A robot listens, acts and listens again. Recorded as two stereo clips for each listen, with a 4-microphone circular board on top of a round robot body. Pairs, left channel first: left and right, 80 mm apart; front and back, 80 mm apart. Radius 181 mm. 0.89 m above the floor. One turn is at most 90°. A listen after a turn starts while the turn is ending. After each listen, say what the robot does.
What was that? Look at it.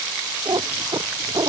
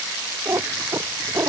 Turn 90° right.
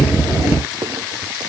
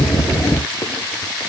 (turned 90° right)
Turn 35° right.
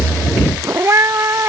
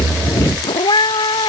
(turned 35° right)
Turn 35° right.
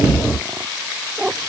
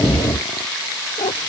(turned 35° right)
Turn 10° right.
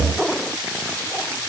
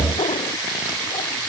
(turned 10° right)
Facing the cat meowing.